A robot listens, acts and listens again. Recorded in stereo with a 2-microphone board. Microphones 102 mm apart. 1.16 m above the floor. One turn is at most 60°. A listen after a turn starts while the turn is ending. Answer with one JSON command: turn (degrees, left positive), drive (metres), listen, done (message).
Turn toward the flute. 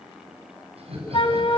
{"turn": 55}
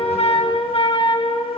{"turn": 60}
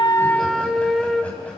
{"done": "Facing the flute."}